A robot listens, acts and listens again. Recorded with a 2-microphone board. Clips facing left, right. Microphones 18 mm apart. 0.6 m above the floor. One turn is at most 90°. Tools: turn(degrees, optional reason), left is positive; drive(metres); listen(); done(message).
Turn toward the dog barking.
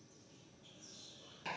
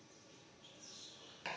listen()
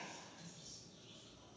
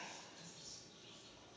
listen()
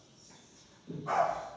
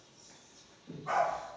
turn(degrees=-30)
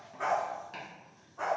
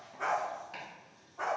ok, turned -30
turn(degrees=10, reason="So it is at 10° left.")
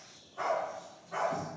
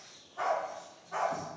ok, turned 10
done("Found it: a dog barking, straight ahead, 2 to 4 m away.")